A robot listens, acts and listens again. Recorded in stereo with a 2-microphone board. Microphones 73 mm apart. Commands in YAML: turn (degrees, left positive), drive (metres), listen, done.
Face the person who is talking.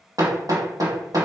listen: true
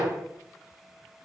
listen: true
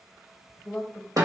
turn: 30
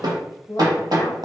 turn: 135
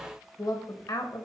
turn: 60
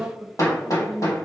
turn: -10
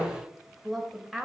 done: "Found it: a woman speaking, straight ahead, 1 to 2 m away."